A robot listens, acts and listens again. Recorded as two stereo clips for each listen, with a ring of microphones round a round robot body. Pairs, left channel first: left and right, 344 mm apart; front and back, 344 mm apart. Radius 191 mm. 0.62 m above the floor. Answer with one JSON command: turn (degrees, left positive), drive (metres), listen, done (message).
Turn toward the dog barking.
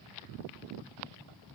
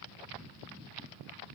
{"listen": true}
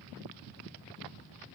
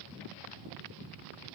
{"listen": true}
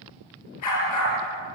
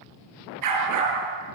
{"turn": 140}
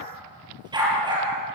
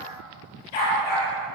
{"turn": -10}
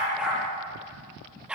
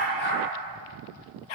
{"done": "Facing the dog barking."}